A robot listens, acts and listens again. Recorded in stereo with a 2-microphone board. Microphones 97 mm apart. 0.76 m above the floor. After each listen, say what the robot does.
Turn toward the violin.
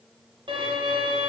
Turn 60° right.
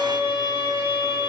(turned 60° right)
Turn 60° right.
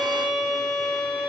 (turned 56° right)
Facing the violin.